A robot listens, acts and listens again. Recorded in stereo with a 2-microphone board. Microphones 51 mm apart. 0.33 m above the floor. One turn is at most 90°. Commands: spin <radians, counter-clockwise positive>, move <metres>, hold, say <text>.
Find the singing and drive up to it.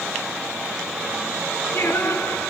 spin 1.13
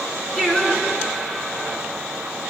move 1.0
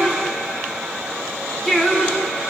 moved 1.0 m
spin 0.26
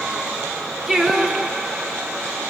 move 1.0
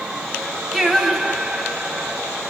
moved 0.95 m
move 1.0
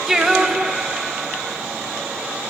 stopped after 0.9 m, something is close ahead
spin -0.17
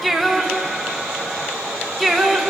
say I am next to the singing.